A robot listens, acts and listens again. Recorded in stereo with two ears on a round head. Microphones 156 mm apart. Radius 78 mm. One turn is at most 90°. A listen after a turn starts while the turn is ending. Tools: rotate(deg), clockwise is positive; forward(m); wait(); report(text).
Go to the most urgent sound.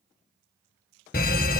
rotate(-55)
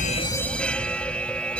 forward(1.0)
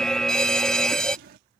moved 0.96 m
forward(1.0)
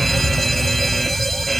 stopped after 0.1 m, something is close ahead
report("Arrived at the fire alarm, straight ahead.")